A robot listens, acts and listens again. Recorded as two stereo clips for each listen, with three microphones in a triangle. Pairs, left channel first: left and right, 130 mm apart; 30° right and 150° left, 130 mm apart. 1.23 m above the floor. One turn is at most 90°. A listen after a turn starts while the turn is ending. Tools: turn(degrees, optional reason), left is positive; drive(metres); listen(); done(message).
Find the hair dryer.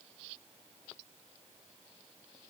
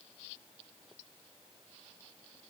listen()
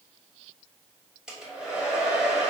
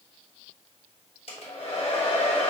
done("Found it: a hair dryer, straight ahead, 1 to 2 m away.")